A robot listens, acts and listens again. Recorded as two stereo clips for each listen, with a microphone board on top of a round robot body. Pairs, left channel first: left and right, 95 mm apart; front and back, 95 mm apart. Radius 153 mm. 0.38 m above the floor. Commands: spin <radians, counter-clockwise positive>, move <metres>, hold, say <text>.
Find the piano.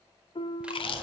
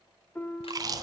spin 1.22
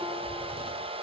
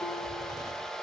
hold
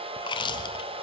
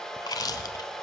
hold
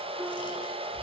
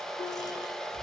say I heard a piano from this way, but can't make it out now.